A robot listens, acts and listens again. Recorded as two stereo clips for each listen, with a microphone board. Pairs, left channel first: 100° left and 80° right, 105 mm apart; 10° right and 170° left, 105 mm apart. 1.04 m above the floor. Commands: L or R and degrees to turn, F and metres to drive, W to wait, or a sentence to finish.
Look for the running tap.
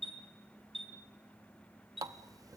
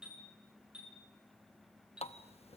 R20
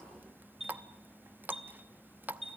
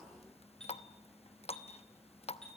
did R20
Facing the running tap.